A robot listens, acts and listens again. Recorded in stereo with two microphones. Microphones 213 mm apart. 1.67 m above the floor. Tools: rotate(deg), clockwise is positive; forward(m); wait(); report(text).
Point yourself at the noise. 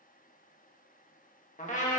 rotate(-35)
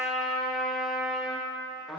report("Facing the trumpet.")